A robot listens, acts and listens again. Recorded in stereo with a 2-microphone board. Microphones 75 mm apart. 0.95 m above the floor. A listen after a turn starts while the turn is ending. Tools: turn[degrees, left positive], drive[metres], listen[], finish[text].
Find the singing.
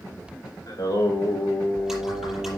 Thought: The singing: about 45° left or 135° left.
Action: turn[45]
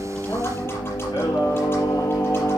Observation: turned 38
Thought: So it is at 115° left.
Action: turn[115]
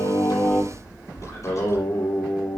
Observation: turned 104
Thought: The singing is now 30° left.
Action: turn[30]
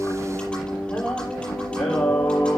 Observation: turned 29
Action: finish[Found it: singing, straight ahead, 2 to 4 m away.]